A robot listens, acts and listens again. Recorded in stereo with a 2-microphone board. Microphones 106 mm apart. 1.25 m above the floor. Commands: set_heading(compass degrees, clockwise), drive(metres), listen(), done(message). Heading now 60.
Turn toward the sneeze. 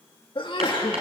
set_heading(10)
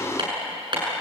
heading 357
listen()
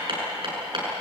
done("I heard a sneeze, but can't make it out now. It was about 10° right or 65° left.")